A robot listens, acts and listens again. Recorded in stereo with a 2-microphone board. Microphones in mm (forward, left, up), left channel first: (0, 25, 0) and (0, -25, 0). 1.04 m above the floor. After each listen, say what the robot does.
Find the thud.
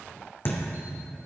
Turn 50° left.
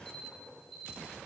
Keep listening.
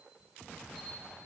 I heard a thud, but can't make it out now. It was about straight ahead or 80° left.